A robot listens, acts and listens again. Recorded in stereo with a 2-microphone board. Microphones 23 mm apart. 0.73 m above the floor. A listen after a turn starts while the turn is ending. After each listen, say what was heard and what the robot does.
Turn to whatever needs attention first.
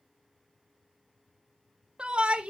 The shout: about 50° right or 130° right. Turn 50° right.
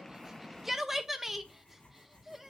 So it is at 15° right. Turn 15° right.
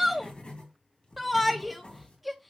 Facing the shout, under 1 m away.